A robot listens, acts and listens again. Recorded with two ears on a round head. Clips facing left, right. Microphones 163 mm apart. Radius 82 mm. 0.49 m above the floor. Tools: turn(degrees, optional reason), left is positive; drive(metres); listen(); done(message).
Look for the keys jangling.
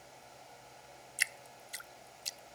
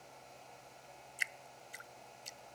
listen()
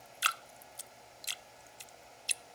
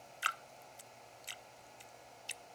listen()
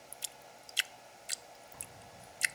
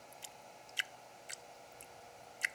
turn(degrees=90)
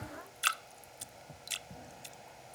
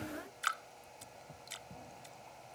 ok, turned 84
turn(degrees=10, reason="So it is at 10° left.")
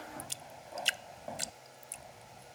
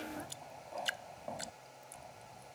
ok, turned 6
done("Found it: keys jangling, straight ahead.")